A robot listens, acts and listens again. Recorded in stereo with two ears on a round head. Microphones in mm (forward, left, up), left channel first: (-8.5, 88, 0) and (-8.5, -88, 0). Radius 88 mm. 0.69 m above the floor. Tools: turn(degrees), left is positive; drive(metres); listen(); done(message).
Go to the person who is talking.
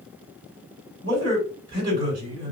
turn(degrees=-20)
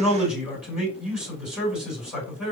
drive(metres=1.0)
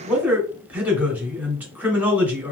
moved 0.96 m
turn(degrees=-10)
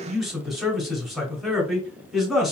drive(metres=1.0)
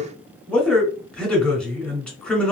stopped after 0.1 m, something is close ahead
done("Arrived at the man speaking, straight ahead.")